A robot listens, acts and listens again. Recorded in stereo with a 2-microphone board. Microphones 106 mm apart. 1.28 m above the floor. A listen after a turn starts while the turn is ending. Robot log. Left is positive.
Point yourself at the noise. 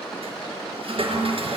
note: The toilet flushing: about 60° right or 120° right.
cmd yaw -60
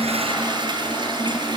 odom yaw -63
note: So it is at 50° right.
cmd yaw -50
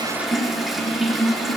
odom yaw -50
end: Facing the toilet flushing.